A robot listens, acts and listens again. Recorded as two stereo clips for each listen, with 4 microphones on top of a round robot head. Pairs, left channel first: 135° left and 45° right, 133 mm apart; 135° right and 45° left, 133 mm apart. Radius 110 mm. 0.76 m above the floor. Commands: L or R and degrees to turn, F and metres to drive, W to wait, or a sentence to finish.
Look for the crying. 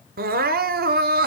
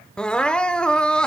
R55
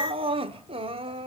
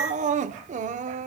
L10
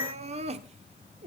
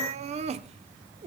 Found it: crying, straight ahead.